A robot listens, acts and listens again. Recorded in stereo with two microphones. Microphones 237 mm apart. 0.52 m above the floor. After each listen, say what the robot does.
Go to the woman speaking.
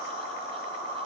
Keep listening.
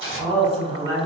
Turn 15° right.
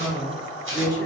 Turn 150° right.
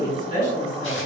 Turn 35° left.
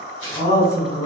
Turn 15° left.
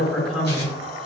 Drive 1.0 m forward.
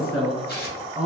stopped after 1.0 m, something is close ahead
Arrived at the woman speaking, straight ahead.